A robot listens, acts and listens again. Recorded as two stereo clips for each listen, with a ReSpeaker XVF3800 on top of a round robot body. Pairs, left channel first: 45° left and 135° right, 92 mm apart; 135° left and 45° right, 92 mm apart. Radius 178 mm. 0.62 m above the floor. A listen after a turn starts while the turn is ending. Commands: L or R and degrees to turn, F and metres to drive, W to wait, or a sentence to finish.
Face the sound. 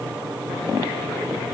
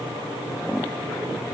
W
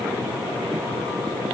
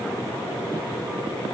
W
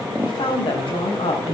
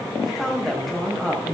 L45
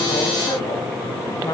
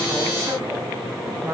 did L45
L10
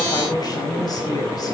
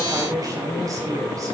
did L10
Facing the woman speaking, over 4 m away.